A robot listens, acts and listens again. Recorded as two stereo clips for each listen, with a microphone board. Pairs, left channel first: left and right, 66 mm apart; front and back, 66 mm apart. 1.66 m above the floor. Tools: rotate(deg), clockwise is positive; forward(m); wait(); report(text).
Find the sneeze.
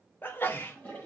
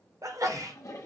rotate(-150)
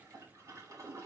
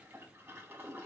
report("Facing where the sneeze came from. I can't hear it now.")